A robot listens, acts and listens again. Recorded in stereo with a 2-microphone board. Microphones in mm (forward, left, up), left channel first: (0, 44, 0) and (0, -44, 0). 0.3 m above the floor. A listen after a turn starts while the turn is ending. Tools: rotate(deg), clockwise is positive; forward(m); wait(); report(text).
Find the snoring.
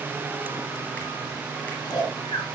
rotate(-50)
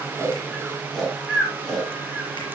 report("Facing the snoring, 2 to 4 m away.")